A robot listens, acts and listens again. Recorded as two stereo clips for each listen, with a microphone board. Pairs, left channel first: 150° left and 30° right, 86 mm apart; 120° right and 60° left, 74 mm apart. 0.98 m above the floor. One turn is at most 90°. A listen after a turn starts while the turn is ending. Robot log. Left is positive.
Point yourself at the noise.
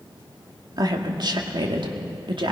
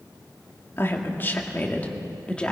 note: The woman speaking: 40° right.
cmd yaw -40
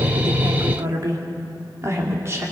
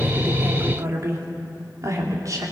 note: The woman speaking is now 25° left.
cmd yaw +25
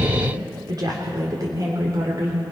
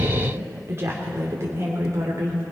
note: The woman speaking is now 15° left.
cmd yaw +15
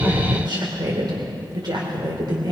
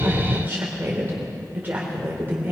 end: Found it: a woman speaking, straight ahead, 2 to 4 m away.